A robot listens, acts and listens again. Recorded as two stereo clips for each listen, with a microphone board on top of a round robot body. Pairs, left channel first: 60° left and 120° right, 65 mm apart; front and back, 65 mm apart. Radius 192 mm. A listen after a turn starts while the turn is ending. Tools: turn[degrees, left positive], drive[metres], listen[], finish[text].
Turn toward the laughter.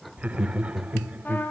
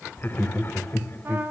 Thought: The laughter: 50° right.
Action: turn[-50]
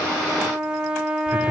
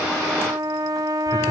Action: listen[]
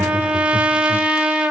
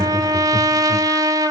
Action: listen[]
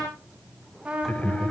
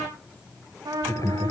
Action: finish[Facing the laughter, 2 to 4 m away.]